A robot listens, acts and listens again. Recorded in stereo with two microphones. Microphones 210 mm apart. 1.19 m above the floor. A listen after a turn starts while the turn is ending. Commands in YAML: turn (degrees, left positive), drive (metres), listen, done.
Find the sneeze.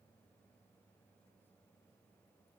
listen: true
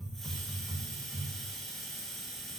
listen: true
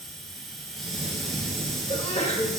turn: 30
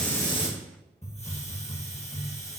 listen: true
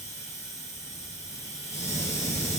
done: "I heard a sneeze, but can't make it out now. It was about straight ahead or 120° left."